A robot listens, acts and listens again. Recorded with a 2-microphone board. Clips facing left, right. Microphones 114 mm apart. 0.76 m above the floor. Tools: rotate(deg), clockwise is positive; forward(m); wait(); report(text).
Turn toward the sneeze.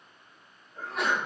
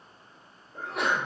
rotate(70)
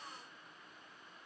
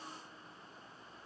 wait()
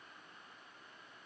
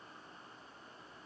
report("I heard a sneeze, but can't make it out now. It was about straight ahead or 40° right.")